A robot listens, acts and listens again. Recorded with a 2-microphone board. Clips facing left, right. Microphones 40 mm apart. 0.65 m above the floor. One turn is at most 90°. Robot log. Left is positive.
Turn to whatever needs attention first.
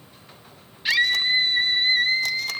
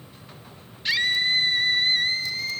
cmd yaw +30
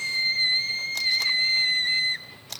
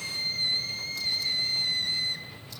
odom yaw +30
note: So it is at 135° left.
cmd yaw +90
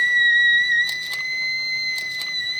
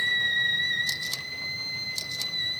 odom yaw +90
note: The scream is now 90° left.
cmd yaw +90
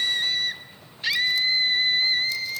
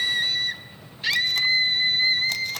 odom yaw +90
end: Found it: a scream, straight ahead.